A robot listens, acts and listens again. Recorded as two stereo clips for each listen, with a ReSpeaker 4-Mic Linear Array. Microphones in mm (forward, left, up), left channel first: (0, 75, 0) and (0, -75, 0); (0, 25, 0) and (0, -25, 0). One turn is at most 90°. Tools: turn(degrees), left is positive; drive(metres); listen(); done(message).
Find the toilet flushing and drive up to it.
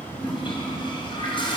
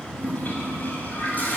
turn(degrees=35)
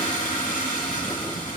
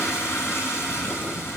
turn(degrees=90)
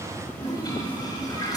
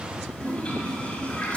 turn(degrees=25)
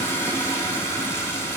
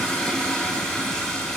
turn(degrees=15)
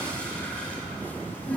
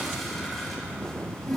turn(degrees=10)
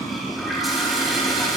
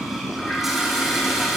drive(metres=1.0)
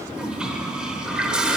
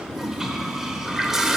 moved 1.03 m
drive(metres=1.0)
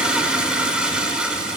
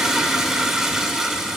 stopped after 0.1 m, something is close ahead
done("I am next to the toilet flushing.")